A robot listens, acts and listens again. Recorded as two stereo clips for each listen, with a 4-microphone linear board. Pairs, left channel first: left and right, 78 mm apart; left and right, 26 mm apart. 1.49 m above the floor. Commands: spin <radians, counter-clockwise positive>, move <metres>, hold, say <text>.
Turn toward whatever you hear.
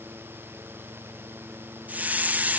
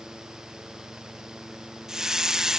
spin -0.35
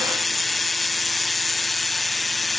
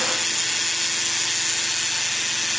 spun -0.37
say Found it: a hiss, straight ahead.